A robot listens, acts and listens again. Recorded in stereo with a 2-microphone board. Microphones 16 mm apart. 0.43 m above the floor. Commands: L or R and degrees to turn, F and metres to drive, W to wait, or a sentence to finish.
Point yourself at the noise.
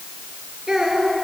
R55
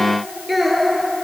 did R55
R10
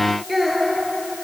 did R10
Found it: a child speaking, straight ahead, over 4 m away.